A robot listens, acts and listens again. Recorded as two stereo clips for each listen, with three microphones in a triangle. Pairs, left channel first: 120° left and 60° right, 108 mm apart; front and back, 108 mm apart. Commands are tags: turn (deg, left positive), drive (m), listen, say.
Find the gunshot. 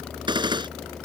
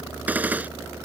<turn deg="-105"/>
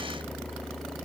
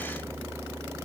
<say>I heard a gunshot from this way, but can't make it out now.</say>